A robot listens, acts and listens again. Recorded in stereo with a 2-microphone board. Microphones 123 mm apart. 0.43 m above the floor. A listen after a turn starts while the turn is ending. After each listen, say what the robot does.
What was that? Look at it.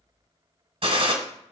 Turn 50° right.
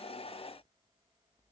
Keep listening.
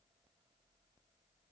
I heard a gunshot, but can't make it out now. It was about straight ahead or 80° right.